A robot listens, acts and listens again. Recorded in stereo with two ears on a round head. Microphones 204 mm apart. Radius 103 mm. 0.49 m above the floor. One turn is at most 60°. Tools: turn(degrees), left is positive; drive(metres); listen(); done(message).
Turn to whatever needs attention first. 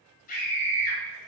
turn(degrees=35)
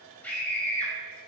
done("Facing the scream.")